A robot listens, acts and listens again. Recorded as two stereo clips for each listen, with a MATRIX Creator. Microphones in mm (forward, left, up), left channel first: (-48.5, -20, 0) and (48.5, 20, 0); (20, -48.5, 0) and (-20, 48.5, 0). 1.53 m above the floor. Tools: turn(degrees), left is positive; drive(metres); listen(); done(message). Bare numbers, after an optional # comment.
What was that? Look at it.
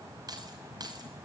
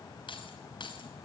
# The keys jangling: 25° right.
turn(-25)
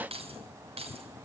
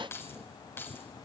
done("Facing the keys jangling.")